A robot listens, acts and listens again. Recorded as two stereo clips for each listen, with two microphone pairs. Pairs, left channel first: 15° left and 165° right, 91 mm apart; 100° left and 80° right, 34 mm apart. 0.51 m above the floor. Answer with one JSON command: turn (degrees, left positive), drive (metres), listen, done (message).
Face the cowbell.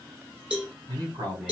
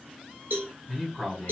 {"turn": -85}
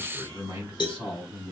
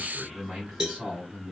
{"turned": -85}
{"done": "Facing the cowbell, 1 to 2 m away."}